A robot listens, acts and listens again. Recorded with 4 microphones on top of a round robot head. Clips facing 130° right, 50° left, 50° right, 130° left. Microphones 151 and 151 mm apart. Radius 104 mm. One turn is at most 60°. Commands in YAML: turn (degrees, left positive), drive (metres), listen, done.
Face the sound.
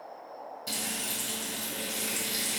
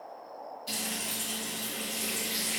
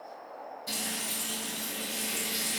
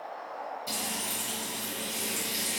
turn: -60
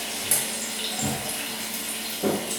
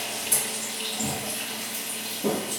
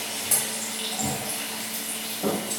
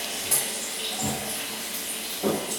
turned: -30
turn: -60
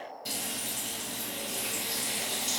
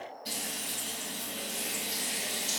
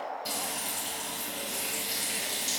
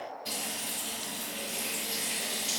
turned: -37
turn: -60
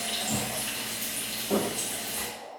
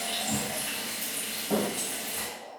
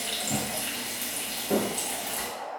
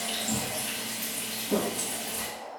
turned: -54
turn: -35
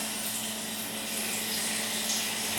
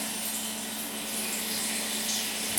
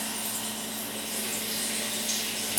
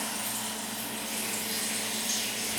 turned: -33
done: "Facing the frying."